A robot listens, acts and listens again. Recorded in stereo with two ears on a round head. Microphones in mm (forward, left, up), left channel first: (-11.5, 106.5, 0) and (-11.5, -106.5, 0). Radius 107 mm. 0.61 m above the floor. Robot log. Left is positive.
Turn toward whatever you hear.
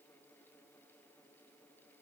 cmd idle
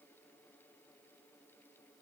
cmd idle
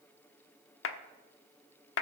note: The clap: about 55° left or 125° left.
cmd yaw +55
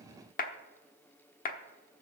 note: So it is at 45° left.
cmd yaw +45
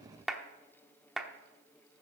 end: Facing the clap.